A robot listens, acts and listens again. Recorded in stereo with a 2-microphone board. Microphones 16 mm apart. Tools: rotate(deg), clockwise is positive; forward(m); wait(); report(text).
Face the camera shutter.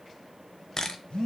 rotate(-35)
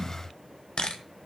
rotate(-115)
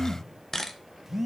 rotate(-30)
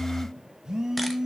wait()
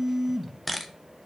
report("Facing the camera shutter.")